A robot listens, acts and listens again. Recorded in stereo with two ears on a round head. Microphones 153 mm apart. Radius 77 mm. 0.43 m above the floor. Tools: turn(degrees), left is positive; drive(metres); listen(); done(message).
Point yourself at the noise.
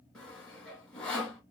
turn(degrees=30)
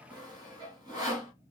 turn(degrees=-25)
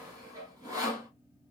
turn(degrees=-25)
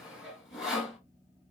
done("Facing the sawing.")